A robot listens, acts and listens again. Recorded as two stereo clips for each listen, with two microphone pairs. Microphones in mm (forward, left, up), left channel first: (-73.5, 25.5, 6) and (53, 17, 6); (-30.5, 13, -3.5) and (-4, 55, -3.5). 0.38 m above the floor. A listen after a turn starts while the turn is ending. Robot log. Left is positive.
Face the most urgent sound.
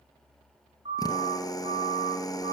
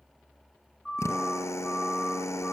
note: The siren: 50° right.
cmd yaw -50
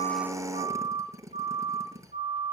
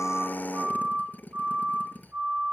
end: Found it: a siren, straight ahead, over 4 m away.